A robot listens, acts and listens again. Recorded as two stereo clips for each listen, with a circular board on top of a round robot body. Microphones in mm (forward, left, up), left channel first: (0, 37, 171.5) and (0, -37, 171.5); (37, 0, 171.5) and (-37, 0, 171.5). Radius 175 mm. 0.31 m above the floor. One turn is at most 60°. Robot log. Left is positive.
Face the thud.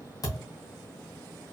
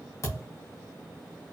note: The thud: 50° left.
cmd yaw +50
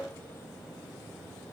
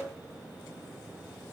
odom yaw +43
note: Nothing new. It was at 10° left.
cmd yaw +10
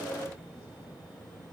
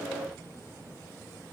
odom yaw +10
end: Facing where the thud came from. I can't hear it now.